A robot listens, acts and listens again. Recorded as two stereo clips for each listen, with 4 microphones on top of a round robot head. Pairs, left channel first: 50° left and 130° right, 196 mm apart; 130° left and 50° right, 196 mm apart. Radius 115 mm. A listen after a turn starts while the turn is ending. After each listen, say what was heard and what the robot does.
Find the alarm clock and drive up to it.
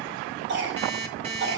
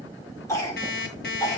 The alarm clock: 170° left. Turn 170° left.
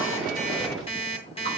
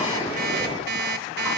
The alarm clock is now 10° right. Turn 10° right.
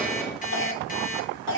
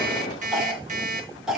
Drive 1.0 m forward.
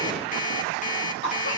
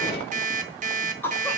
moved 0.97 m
Drive 1.0 m forward.
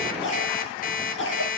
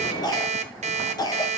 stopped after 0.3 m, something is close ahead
I am next to the alarm clock.